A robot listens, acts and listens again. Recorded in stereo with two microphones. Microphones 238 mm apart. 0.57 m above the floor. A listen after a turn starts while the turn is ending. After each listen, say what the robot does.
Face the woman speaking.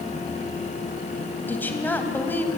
Turn 30° left.
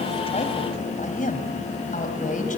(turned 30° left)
Turn 145° left.
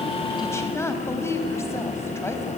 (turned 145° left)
Turn 10° left.
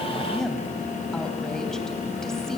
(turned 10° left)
Keep listening.
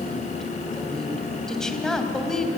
Facing the woman speaking, 2 to 4 m away.